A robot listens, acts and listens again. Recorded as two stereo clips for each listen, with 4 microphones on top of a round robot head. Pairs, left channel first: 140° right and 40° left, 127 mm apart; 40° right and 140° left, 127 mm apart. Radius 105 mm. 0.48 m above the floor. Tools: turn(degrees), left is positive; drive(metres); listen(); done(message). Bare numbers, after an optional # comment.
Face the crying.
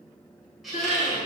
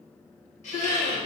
# The crying: 110° right.
turn(-110)
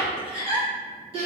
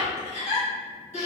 done("Found it: crying, straight ahead, 1 to 2 m away.")